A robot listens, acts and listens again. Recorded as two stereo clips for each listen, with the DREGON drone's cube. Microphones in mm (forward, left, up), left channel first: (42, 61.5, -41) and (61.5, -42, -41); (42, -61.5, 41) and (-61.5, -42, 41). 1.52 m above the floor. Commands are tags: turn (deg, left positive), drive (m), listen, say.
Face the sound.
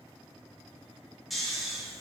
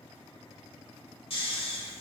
<turn deg="10"/>
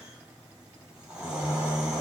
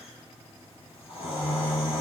<say>Found it: snoring, straight ahead.</say>